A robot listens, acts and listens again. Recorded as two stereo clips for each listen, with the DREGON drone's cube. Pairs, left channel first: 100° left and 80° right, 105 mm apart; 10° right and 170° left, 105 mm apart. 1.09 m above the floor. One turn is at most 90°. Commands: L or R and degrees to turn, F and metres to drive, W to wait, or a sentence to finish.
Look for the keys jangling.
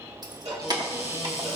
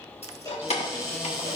R25
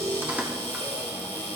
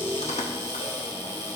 W
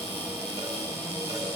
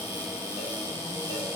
W
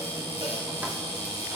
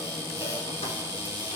I heard keys jangling from this way, but can't make it out now.